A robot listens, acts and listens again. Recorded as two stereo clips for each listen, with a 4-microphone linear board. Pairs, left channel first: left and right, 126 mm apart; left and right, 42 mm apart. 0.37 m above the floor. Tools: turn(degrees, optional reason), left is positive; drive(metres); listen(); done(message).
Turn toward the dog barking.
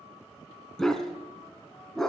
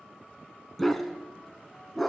turn(degrees=30)
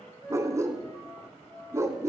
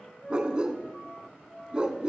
turn(degrees=-25, reason="So it is at 25° right.")
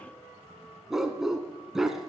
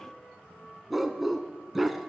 done("Facing the dog barking, 1 to 2 m away.")